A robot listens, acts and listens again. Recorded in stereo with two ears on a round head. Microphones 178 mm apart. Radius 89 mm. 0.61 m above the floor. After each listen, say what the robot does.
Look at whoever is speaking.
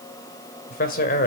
Turn 45° left.
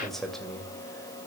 Found it: a man speaking, straight ahead.